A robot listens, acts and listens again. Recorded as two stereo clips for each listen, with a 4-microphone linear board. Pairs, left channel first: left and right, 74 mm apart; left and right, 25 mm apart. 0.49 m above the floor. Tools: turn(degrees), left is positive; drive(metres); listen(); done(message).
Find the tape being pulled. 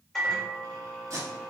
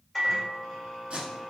turn(degrees=-45)
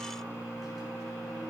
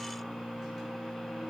listen()
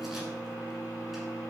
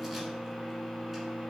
listen()
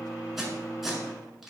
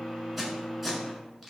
done("Found it: tape being pulled, straight ahead, 1 to 2 m away.")